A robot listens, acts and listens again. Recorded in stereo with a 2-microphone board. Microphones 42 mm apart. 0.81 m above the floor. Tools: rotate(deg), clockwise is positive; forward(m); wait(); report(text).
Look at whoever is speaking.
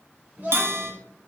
rotate(45)
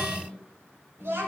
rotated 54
rotate(80)
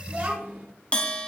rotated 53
rotate(30)
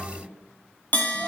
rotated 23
wait()
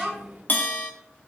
report("Facing the child speaking, 2 to 4 m away.")